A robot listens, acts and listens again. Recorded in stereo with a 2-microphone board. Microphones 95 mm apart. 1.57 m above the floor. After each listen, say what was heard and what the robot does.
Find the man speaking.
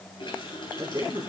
The man speaking: about 40° right or 140° right. Turn 40° right.
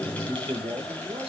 So it is at 105° right. Turn 105° right.
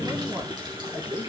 The man speaking is now 50° right. Turn 50° right.
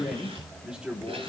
The man speaking is now 10° right. Turn 10° right.
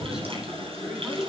Keep listening.
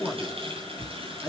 The man speaking is now 10° right. Turn 10° right.
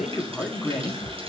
Found it: a man speaking, straight ahead.